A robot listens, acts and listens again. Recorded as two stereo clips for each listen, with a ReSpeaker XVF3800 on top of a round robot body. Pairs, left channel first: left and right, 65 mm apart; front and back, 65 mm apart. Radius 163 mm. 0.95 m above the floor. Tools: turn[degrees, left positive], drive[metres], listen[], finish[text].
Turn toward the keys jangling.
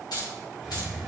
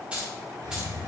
Thought: The keys jangling: 105° left.
Action: turn[105]
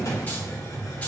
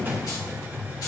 Action: listen[]
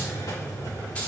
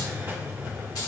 Action: listen[]
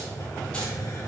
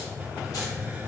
Action: finish[Facing where the keys jangling came from. I can't hear it now.]